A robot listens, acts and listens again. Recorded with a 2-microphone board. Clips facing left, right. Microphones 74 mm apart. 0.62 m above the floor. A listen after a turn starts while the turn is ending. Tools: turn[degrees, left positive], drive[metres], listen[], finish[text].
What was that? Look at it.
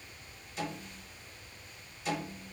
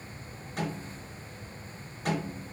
Thought: The snare drum: about 55° right or 125° right.
Action: turn[-55]
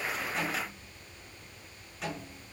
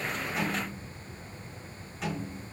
Action: finish[Found it: a snare drum, straight ahead, over 4 m away.]